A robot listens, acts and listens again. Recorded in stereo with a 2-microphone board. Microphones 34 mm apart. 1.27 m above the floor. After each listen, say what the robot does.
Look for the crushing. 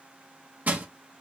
Turn 60° right.
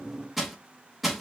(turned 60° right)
Found it: crushing, straight ahead.